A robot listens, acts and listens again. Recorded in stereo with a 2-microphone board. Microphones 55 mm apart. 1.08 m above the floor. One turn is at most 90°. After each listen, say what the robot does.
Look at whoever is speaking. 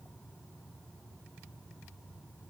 Keep listening.
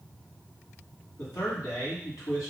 Turn 70° left.
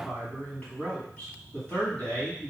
Turn 25° left.
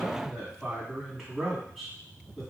Found it: a man speaking, straight ahead, 1 to 2 m away.